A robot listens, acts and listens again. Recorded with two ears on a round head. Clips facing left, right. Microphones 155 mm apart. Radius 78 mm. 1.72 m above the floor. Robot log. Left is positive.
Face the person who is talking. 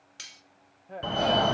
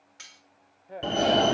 cmd yaw -30
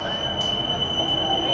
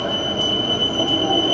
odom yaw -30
cmd idle
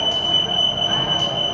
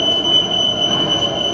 cmd idle
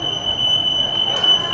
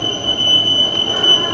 end: I heard a woman speaking, but can't make it out now. It was about 25° left or 145° right.